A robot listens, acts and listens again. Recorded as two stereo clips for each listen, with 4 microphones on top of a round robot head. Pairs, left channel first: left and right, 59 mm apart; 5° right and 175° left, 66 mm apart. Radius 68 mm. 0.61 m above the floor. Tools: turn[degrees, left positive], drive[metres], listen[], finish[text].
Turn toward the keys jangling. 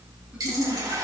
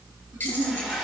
Action: listen[]
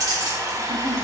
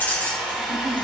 Thought: The keys jangling: 70° right.
Action: turn[-70]
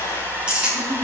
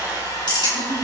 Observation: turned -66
Thought: The keys jangling is now 15° right.
Action: turn[-15]
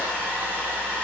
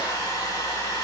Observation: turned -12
Action: listen[]
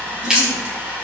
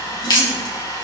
Thought: The keys jangling is now 15° right.
Action: turn[-15]
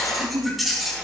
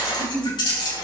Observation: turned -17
Action: finish[Found it: keys jangling, straight ahead, over 4 m away.]